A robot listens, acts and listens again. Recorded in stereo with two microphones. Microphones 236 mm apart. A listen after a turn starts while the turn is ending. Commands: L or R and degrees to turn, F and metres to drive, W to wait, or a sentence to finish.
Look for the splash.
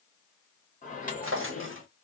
W
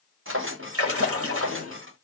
R70
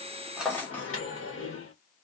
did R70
W
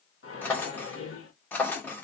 I heard a splash, but can't make it out now. It was about straight ahead or 40° right.